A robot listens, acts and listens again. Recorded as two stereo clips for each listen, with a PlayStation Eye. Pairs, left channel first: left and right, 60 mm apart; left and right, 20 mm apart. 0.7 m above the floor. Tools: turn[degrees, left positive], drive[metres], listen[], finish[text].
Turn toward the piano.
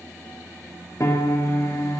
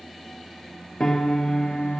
Thought: The piano: about 55° left or 125° left.
Action: turn[55]
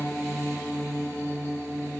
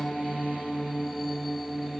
Action: finish[Found it: a piano, straight ahead.]